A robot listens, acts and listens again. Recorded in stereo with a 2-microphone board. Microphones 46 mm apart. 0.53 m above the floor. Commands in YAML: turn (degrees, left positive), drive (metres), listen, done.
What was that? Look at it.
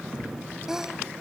turn: -30
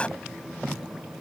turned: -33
listen: true
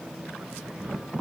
done: "I heard a sneeze, but can't make it out now. It was about 25° left or 135° right."